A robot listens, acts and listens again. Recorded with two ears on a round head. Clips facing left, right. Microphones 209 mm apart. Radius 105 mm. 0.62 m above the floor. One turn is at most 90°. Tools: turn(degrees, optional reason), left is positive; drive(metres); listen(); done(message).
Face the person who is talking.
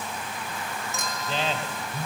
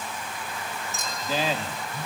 turn(degrees=-30)
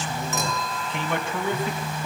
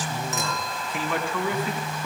turn(degrees=25, reason="So it is at 25° left.")
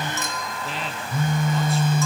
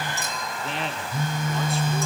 done("Facing the man speaking.")